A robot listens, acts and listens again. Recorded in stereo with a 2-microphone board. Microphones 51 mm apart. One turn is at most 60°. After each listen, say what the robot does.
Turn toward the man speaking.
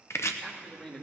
Turn 20° left.
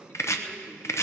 Turn 60° left.
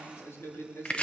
Turn 55° left.
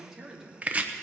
Turn 10° right.
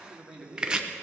Found it: a man speaking, straight ahead, 2 to 4 m away.